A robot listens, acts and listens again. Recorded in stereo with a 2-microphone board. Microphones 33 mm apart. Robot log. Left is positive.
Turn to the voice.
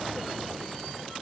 cmd idle
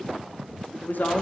note: The woman speaking: about 75° left or 105° left.
cmd yaw +75
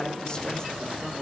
note: So it is at 25° left.
cmd yaw +25
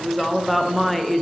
end: Facing the woman speaking.